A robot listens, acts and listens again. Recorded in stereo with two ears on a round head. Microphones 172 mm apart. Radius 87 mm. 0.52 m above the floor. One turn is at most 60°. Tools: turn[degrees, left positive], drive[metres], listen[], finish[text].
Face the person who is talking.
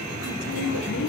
Thought: The woman speaking: about 70° left or 110° left.
Action: turn[60]
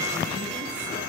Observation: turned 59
Action: listen[]
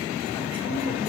Action: listen[]
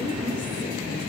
Thought: So it is at 10° left.
Action: turn[10]
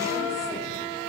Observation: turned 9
Action: listen[]
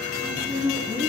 Action: finish[Found it: a woman speaking, straight ahead, over 4 m away.]